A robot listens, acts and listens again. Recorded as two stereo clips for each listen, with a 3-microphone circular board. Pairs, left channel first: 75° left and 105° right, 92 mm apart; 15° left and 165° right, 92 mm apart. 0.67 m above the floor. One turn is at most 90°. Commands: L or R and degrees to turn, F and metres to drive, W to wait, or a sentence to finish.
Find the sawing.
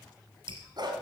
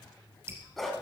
W
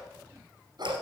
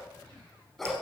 W
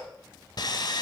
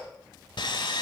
L40
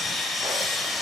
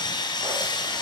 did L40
R15
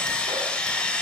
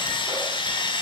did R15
Facing the sawing.